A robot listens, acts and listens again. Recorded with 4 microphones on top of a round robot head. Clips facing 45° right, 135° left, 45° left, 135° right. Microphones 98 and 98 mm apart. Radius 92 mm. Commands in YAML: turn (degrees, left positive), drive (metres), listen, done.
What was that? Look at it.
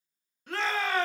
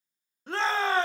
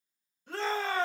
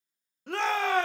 turn: -165
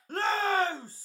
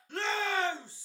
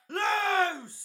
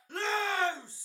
done: "Found it: a shout, straight ahead, 1 to 2 m away."